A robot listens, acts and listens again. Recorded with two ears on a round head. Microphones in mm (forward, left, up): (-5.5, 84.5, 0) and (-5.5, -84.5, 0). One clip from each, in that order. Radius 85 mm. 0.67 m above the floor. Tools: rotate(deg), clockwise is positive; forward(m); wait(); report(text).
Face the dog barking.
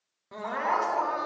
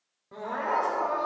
rotate(-90)
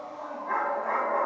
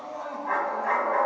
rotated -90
rotate(35)
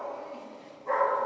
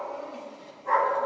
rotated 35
rotate(25)
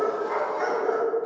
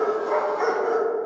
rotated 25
report("Found it: a dog barking, straight ahead.")